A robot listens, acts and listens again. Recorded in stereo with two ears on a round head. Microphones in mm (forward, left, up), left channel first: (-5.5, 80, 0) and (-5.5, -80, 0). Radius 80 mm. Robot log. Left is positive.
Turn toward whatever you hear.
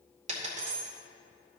note: The dropped coin: about 40° right or 140° right.
cmd yaw -40
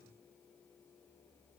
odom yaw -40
cmd idle
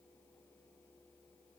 end: I heard a dropped coin, but can't make it out now. It was about straight ahead or 100° right.